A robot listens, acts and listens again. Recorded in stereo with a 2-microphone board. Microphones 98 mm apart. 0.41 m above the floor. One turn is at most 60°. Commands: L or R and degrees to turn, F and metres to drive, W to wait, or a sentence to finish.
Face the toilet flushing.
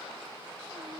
W
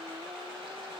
W
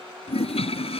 L60
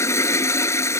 L30
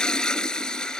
L10
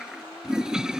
Found it: a toilet flushing, straight ahead.